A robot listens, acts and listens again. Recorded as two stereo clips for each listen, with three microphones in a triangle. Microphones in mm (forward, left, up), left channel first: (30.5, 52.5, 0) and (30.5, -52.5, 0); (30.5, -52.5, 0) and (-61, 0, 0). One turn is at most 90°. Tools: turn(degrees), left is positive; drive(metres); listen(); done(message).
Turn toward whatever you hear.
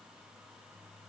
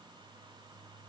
listen()
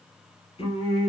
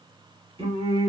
turn(degrees=90)
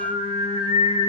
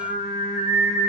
turn(degrees=60)
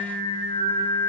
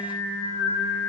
done("Found it: singing, straight ahead.")